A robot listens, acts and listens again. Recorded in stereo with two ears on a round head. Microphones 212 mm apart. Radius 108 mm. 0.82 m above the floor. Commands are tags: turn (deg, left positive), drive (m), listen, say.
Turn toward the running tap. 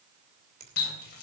<turn deg="45"/>
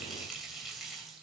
<say>Facing the running tap.</say>